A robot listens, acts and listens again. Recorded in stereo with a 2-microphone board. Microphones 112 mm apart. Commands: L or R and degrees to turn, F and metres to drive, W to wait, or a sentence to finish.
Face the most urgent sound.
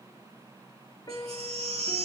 R65
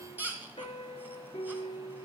R20
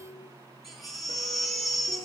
Facing the baby crying, 2 to 4 m away.